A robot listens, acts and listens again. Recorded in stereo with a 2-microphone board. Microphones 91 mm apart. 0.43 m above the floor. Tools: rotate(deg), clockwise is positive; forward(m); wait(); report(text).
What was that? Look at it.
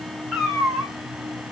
rotate(-30)
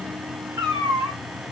rotate(25)
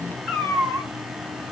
rotate(-10)
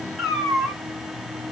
report("Found it: a cat meowing, straight ahead, 1 to 2 m away.")